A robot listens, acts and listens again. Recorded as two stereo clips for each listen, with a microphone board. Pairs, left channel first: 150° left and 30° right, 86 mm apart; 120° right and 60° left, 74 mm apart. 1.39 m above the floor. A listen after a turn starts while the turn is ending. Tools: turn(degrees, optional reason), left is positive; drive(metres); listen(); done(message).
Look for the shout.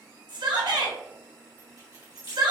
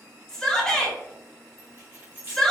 turn(degrees=-40, reason="The shout: 40° right.")
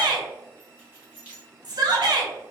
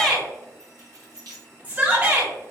done("Found it: a shout, straight ahead.")